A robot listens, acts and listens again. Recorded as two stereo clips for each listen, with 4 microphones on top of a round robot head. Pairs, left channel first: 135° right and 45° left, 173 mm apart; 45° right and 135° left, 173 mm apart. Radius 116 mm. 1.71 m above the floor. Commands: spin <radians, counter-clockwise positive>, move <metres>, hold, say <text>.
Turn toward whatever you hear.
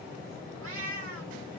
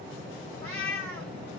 spin 0.61
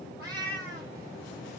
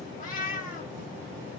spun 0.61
say Found it: a cat meowing, straight ahead.